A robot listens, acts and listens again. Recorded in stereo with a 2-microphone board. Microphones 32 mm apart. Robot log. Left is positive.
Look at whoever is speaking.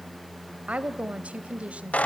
note: The woman speaking: about 45° right or 135° right.
cmd yaw -45
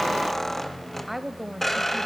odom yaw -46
end: Found it: a woman speaking, straight ahead.